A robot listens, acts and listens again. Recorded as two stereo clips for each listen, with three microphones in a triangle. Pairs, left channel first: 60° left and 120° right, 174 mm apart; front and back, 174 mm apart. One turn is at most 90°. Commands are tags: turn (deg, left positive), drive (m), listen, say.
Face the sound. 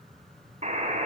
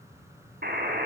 <turn deg="-90"/>
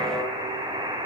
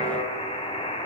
<turn deg="-55"/>
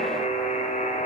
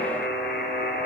<turn deg="20"/>
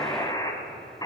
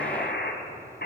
<say>Facing the buzzer.</say>